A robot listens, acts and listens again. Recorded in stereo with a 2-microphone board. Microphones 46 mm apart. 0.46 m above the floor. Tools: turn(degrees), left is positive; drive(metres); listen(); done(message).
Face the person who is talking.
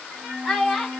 turn(degrees=30)
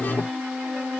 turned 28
listen()
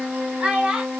turn(degrees=-25)
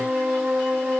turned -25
listen()
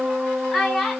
done("Facing the child speaking, 1 to 2 m away.")